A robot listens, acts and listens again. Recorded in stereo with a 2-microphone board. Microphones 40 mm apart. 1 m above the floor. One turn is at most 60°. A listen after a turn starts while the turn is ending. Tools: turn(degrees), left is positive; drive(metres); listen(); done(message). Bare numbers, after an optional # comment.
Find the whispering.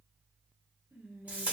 # The whispering: about 70° right or 110° right.
turn(-60)
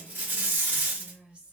# So it is at 40° right.
turn(-40)
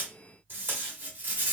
listen()
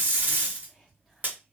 listen()
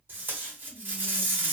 done("I heard whispering from this way, but can't make it out now.")